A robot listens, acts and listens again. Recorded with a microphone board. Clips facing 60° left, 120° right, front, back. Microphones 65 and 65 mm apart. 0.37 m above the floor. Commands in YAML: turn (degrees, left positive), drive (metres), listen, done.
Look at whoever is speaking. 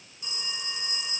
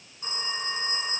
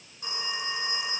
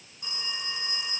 listen: true
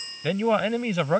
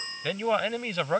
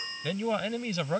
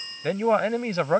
turn: 145
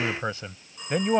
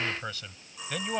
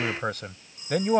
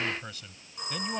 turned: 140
done: "Found it: a man speaking, straight ahead."